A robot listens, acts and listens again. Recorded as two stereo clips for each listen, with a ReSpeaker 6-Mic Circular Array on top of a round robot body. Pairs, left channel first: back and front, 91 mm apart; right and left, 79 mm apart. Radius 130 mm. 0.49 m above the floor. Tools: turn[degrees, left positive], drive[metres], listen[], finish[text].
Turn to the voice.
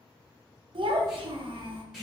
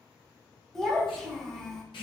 Action: finish[Facing the child speaking.]